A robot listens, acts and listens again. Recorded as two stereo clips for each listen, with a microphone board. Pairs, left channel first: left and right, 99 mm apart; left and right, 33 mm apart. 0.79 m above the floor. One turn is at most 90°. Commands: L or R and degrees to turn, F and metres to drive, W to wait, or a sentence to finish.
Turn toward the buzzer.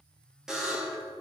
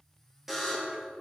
R30
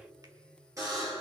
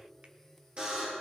R90
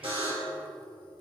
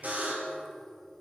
R60
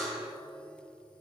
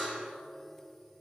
Facing the buzzer.